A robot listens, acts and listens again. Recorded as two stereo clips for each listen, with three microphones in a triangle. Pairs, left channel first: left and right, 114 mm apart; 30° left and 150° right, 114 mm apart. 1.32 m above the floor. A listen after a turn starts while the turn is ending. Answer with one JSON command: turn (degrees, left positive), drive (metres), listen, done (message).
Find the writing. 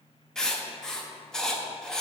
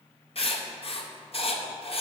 {"done": "Found it: writing, straight ahead."}